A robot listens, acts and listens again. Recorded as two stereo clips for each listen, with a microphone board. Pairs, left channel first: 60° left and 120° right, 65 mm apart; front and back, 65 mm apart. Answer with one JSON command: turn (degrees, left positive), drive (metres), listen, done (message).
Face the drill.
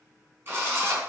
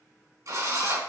{"turn": -170}
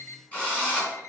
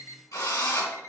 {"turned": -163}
{"turn": -10}
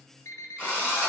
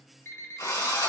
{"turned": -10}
{"done": "Facing the drill."}